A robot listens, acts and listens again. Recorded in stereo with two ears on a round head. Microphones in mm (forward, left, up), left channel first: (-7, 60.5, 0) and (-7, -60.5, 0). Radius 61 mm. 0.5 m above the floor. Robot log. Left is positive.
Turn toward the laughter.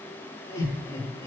note: The laughter: about 20° left or 160° left.
cmd yaw +20
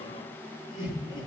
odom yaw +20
note: The laughter: about 35° left or 145° left.
cmd yaw +35
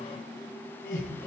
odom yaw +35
note: So it is at 115° left.
cmd yaw +115
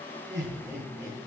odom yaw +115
note: The laughter is now 15° right.
cmd yaw -15
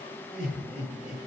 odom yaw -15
end: Found it: laughter, straight ahead.